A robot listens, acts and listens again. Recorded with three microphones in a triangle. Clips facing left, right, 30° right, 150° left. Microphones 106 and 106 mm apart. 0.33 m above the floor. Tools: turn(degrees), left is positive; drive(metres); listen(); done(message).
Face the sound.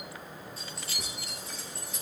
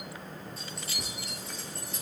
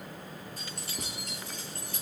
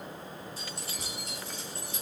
done("Facing the keys jangling.")